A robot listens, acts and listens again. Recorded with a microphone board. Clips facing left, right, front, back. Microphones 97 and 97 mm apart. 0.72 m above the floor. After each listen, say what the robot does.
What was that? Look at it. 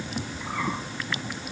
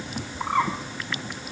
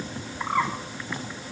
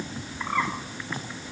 Turn 80° right.
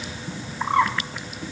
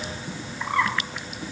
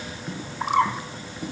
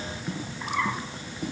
Turn 25° left.
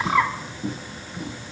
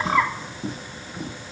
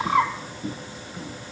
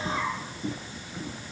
Found it: a bird, straight ahead.